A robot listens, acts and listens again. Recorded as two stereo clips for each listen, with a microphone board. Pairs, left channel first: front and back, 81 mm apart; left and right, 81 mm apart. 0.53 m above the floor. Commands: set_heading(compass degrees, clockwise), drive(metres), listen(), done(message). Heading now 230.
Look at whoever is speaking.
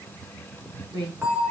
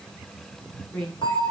set_heading(60)
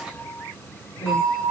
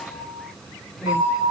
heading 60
listen()
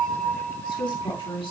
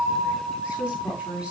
set_heading(75)
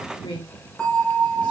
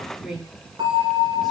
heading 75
done("Found it: a woman speaking, straight ahead, over 4 m away.")